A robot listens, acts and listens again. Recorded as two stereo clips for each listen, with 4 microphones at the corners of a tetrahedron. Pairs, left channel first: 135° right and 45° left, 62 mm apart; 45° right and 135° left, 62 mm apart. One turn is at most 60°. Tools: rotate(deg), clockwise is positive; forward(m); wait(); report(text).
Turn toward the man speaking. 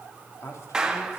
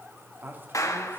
rotate(60)
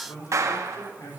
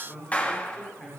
rotate(60)
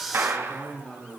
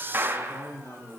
rotate(60)
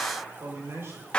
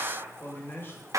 report("Found it: a man speaking, straight ahead, over 4 m away.")